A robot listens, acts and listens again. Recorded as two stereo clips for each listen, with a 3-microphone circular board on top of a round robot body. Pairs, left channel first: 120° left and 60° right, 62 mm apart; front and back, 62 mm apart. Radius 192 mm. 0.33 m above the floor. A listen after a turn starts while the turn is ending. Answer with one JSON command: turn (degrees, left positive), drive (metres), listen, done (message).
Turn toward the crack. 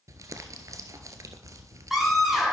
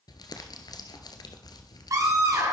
{"listen": true}
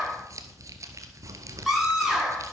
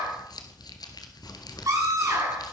{"turn": -50}
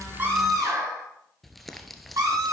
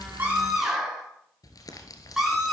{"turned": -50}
{"done": "Facing where the crack came from. I can't hear it now."}